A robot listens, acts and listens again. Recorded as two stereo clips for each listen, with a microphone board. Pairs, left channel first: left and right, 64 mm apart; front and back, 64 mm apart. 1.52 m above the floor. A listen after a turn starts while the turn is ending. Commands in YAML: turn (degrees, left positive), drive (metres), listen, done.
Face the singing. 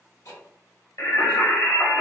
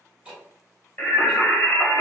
turn: 35
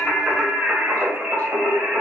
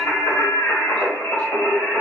turn: -45
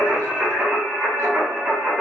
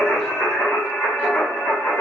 turn: -25
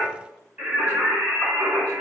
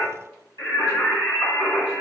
turn: -20
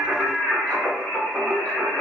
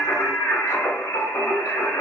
done: "Found it: singing, straight ahead."